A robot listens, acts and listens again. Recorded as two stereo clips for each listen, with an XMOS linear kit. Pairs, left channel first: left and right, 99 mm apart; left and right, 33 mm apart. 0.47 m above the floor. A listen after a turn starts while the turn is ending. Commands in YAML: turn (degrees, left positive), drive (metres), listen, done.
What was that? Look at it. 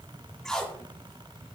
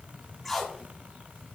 turn: 30
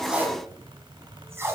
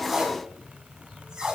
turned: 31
turn: -25
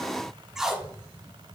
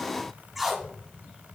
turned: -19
done: "Found it: tape being pulled, straight ahead, 1 to 2 m away."